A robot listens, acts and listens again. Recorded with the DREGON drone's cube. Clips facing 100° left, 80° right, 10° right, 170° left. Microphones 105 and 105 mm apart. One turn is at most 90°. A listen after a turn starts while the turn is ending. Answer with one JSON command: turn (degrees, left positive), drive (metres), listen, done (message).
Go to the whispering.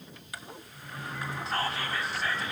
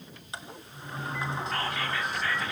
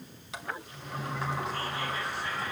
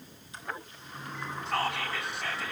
{"turn": 90}
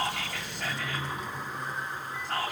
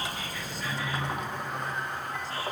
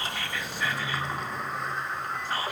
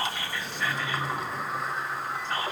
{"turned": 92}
{"turn": 70}
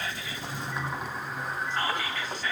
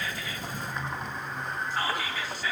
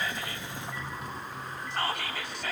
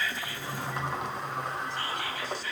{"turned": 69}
{"drive": 1.0}
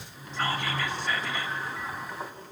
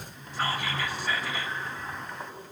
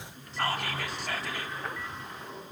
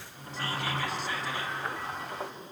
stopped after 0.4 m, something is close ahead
{"done": "Blocked. The whispering is further on, straight ahead."}